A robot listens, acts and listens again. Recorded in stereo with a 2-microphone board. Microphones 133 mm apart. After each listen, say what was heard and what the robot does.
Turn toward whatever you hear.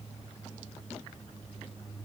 Keep listening.
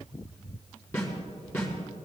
The snare drum: about 20° left or 160° left. Turn 20° left.
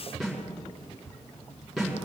Facing the snare drum, over 4 m away.